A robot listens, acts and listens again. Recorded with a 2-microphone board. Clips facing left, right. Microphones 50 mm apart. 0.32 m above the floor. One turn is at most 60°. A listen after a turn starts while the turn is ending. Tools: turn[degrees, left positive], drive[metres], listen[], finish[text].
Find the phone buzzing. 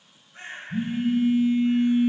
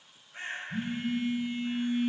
Action: turn[30]
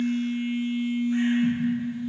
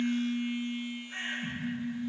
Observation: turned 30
Thought: So it is at 140° left.
Action: turn[60]
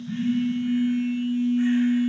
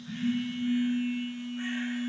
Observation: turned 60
Thought: The phone buzzing is now 90° left.
Action: turn[60]
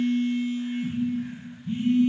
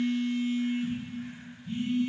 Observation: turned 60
Thought: The phone buzzing is now 30° left.
Action: turn[30]
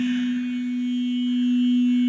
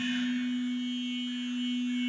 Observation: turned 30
Thought: The phone buzzing is now 10° left.
Action: turn[10]
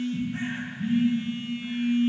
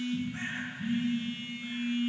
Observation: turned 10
Action: finish[Facing the phone buzzing, 1 to 2 m away.]